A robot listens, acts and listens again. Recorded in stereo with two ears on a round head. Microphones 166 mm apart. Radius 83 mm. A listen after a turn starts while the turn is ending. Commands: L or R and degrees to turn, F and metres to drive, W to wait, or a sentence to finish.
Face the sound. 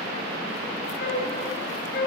L55
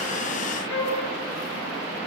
L70
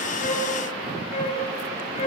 L35
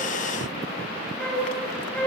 L10
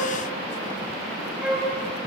Found it: a flute, straight ahead.